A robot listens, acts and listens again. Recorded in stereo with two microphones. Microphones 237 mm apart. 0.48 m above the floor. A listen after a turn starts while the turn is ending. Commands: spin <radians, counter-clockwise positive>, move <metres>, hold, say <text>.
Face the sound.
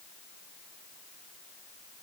hold
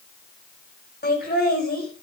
spin 0.79
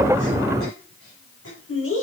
spin 1.31
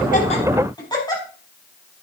spin 0.35
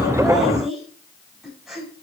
say Found it: laughter, straight ahead.